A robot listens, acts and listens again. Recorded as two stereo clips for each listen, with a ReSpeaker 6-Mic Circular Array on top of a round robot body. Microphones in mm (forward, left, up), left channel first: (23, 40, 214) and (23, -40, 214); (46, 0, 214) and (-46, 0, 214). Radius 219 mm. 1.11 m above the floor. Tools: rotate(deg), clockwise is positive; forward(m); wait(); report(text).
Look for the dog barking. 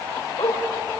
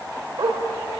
rotate(-125)
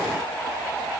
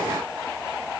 wait()
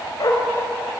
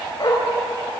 rotate(-45)
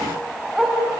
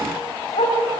report("Facing the dog barking.")